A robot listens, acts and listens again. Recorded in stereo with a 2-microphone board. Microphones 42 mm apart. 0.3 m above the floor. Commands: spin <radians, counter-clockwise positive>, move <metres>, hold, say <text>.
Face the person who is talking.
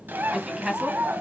spin -0.35
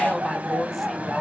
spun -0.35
say Found it: a woman speaking, straight ahead.